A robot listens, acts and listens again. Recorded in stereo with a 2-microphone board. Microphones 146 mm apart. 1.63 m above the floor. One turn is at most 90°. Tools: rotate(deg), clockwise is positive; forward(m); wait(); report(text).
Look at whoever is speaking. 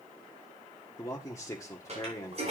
rotate(-20)
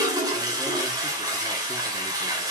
wait()
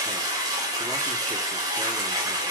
wait()
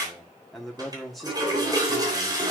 report("Facing the man speaking, 1 to 2 m away.")